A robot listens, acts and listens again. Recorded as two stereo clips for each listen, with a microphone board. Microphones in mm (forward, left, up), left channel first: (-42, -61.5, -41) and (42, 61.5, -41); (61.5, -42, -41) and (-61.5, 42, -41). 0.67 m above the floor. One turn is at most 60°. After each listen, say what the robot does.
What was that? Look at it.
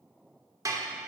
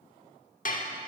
Turn 10° right.
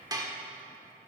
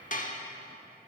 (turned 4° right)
Turn 10° right.
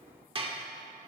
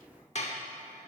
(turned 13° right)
Facing the dishes clattering, 1 to 2 m away.